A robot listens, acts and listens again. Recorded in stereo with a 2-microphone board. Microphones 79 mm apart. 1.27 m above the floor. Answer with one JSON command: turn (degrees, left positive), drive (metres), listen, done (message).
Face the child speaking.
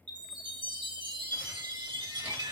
{"listen": true}
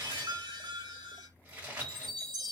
{"listen": true}
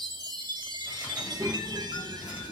{"turn": -45}
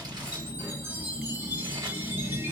{"turn": -60}
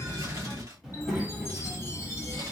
{"turn": -10}
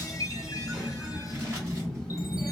{"done": "Facing the child speaking, 1 to 2 m away."}